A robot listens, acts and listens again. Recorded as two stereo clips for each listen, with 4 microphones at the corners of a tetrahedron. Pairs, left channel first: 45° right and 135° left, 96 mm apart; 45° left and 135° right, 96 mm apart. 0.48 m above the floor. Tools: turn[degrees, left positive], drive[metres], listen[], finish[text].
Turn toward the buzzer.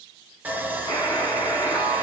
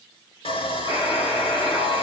Thought: The buzzer: 10° left.
Action: turn[10]
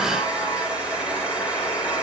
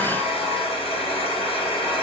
Action: finish[Facing the buzzer, 2 to 4 m away.]